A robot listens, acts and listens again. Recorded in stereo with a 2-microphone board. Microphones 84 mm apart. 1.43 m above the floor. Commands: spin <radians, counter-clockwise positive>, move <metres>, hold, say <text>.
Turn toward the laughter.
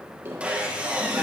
spin -0.44
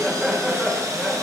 say Facing the laughter.